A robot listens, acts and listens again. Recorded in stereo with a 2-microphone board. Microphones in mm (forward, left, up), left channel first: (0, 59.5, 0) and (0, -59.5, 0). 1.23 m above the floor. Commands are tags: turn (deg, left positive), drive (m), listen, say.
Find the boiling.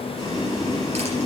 <turn deg="40"/>
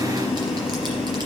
<say>Facing the boiling, 2 to 4 m away.</say>